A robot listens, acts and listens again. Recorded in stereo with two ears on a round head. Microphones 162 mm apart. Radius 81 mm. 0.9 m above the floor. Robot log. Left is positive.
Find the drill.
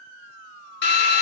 note: The drill: about 65° left or 115° left.
cmd yaw +65
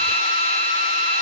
note: So it is at 35° left.
cmd yaw +35
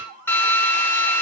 note: The drill is now 15° left.
cmd yaw +15
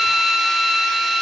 end: Facing the drill, under 1 m away.